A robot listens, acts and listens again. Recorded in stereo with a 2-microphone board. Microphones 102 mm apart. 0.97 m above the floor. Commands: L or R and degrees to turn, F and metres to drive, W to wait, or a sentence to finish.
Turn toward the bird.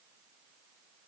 W
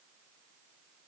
W
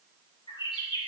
L55
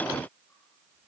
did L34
W
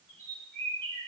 L25
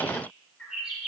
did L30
Found it: a bird, straight ahead, 2 to 4 m away.